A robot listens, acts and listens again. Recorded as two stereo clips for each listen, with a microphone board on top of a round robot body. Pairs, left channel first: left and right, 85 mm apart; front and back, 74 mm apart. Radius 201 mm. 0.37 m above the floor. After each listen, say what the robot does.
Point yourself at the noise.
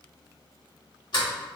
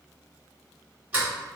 Turn 115° left.
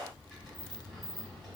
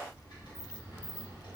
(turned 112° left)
Facing the sliding door, 1 to 2 m away.